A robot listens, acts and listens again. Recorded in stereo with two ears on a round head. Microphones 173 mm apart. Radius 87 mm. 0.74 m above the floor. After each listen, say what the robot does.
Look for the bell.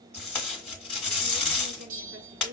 Turn 45° right.
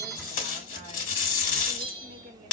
Turn 90° right.
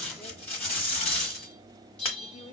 Found it: a bell, straight ahead.